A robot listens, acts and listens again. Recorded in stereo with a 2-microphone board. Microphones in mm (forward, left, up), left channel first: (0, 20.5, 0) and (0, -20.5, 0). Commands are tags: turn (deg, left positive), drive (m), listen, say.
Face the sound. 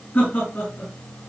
<turn deg="40"/>
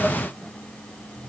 <listen/>
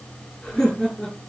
<say>Found it: laughter, straight ahead.</say>